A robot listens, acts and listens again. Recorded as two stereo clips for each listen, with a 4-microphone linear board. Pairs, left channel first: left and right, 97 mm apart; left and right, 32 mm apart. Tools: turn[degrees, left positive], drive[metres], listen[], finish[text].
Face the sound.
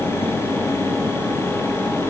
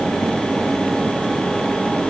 Action: listen[]
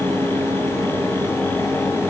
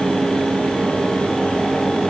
Action: listen[]
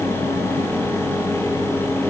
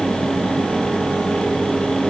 Action: finish[I can't make out anything.]